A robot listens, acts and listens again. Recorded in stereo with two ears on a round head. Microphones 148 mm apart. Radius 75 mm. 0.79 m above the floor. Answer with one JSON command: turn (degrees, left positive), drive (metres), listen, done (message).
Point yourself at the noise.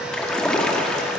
{"turn": 30}
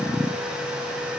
{"listen": true}
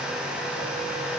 {"done": "I heard a splash, but can't make it out now. It was about 25° right or 145° left."}